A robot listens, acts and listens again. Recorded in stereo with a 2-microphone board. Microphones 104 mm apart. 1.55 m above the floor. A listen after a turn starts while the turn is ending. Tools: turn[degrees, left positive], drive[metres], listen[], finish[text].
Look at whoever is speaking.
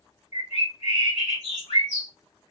Action: listen[]
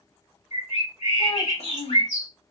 Thought: The child speaking: about 65° left or 115° left.
Action: turn[65]
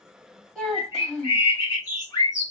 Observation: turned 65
Action: finish[Facing the child speaking, 1 to 2 m away.]